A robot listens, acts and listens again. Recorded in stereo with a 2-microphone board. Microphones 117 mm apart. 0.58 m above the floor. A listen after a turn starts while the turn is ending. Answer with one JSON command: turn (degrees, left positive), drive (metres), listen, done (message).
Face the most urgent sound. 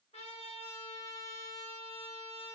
{"listen": true}
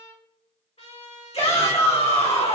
{"turn": 60}
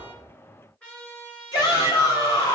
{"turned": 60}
{"turn": 40}
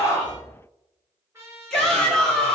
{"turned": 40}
{"done": "Found it: a shout, straight ahead, 1 to 2 m away."}